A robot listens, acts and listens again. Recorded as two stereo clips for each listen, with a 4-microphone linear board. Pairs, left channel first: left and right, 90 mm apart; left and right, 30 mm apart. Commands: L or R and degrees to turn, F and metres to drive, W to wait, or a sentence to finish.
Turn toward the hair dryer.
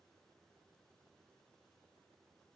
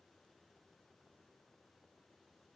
W
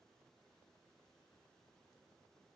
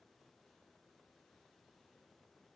W
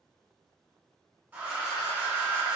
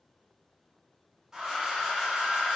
R25
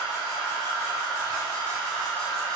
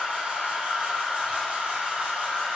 R130
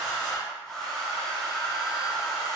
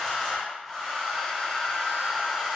Found it: a hair dryer, straight ahead, 1 to 2 m away.